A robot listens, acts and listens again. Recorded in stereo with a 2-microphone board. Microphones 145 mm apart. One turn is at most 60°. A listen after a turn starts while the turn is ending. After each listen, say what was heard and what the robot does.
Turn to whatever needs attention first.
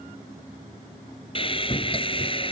Keep listening.
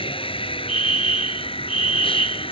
The fire alarm: about 60° right or 120° right. Turn 60° right.
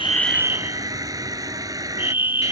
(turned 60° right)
So it is at 15° right. Turn 15° right.
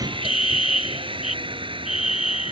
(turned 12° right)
Found it: a fire alarm, straight ahead.